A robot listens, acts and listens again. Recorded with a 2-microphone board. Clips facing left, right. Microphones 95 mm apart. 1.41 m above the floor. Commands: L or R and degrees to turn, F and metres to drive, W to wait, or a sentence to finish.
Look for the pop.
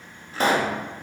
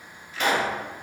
L40
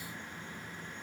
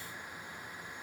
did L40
W
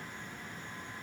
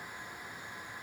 I heard a pop, but can't make it out now. It was about straight ahead or 100° left.